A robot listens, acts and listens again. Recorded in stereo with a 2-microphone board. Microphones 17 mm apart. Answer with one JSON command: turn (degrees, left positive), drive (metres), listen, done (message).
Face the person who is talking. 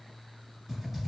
{"listen": true}
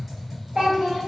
{"turn": -55}
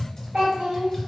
{"turn": -70}
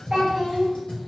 {"turn": -30}
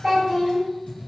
{"done": "Facing the child speaking."}